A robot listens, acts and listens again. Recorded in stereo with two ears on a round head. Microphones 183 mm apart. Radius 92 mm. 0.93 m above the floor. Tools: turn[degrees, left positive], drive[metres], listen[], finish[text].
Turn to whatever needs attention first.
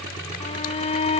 Thought: The shout: about 35° left or 145° left.
Action: turn[35]
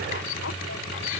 Thought: So it is at 110° left.
Action: turn[110]
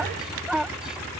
Action: finish[Found it: a shout, straight ahead.]